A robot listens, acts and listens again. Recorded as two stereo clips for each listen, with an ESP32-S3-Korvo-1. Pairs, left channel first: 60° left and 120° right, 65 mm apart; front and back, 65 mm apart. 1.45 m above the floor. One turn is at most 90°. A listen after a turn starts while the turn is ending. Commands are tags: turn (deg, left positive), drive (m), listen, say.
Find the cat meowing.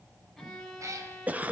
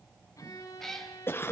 <turn deg="-85"/>
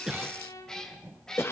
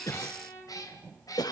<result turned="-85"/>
<turn deg="-20"/>
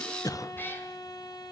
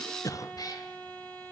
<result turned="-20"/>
<say>Found it: a cat meowing, straight ahead, 2 to 4 m away.</say>